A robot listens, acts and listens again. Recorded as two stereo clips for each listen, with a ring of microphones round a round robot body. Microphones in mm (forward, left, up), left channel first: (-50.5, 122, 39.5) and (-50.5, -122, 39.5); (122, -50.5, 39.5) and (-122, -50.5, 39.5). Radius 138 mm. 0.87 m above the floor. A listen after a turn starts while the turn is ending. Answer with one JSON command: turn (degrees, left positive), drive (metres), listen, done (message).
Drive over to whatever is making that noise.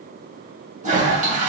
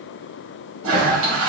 {"turn": -150}
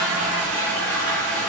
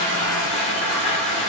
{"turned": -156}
{"drive": 1.0}
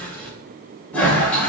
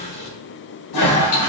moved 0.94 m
{"drive": 1.0}
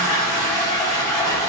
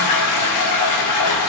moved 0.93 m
{"turn": 15}
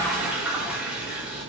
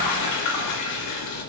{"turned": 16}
{"drive": 1.0}
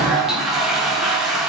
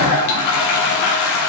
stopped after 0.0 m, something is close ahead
{"done": "I am next to the toilet flushing."}